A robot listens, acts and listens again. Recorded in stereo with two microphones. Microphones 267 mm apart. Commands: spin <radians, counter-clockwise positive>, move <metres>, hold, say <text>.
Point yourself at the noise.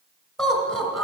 spin 0.52
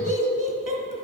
spin -0.52
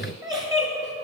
spin -0.26
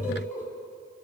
say Facing the laughter.